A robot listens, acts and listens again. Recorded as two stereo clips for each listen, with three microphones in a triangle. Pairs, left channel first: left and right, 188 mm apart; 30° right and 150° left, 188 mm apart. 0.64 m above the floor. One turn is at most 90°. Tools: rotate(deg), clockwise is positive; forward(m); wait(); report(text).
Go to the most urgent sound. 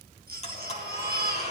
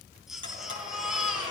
rotate(90)
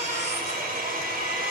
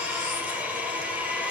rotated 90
rotate(30)
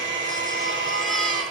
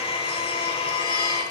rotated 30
wait()
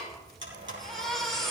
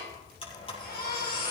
forward(1.0)
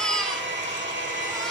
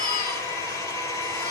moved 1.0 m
forward(1.0)
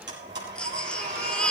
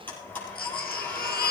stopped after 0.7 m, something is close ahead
report("Arrived at the baby crying, straight ahead.")